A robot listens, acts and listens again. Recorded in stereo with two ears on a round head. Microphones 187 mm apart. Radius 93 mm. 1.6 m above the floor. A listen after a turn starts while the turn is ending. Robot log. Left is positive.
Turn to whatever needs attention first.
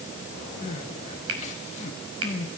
note: The crying: about 35° left or 145° left.
cmd yaw +35
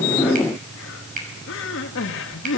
note: So it is at 110° left.
cmd yaw +110
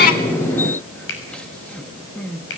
end: Facing the crying, 2 to 4 m away.